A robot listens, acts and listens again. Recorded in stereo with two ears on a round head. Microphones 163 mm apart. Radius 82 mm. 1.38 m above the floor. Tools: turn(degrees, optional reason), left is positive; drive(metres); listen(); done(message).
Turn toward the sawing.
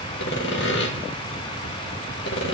turn(degrees=70, reason="The sawing: about 70° left or 110° left.")
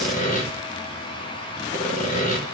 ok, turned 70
turn(degrees=40, reason="So it is at 40° left.")
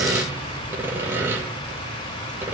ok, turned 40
turn(degrees=-15, reason="The sawing is now 15° right.")
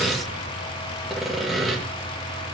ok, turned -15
done("Found it: sawing, straight ahead, 1 to 2 m away.")